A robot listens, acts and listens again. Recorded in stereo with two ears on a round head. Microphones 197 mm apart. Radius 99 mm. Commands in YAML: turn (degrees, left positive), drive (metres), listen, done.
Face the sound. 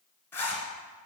turn: 30
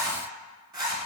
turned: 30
turn: -20
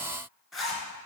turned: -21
done: "Found it: a zipper, straight ahead."